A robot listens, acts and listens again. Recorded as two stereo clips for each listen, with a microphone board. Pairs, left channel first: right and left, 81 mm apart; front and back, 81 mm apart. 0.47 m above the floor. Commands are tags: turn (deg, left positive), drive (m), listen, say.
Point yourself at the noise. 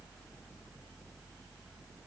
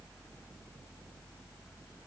<listen/>
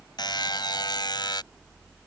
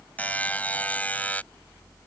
<turn deg="-70"/>
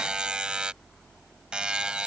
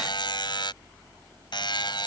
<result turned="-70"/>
<turn deg="10"/>
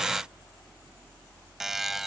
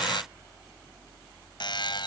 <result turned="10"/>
<say>Found it: a buzzer, straight ahead.</say>